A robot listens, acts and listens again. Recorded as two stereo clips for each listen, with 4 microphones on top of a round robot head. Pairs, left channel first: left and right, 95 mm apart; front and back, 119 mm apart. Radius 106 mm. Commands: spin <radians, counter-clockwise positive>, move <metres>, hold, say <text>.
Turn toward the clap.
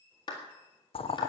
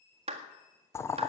spin 2.53
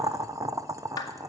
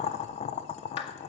spin 0.70
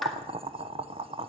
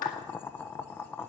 say Found it: a clap, straight ahead.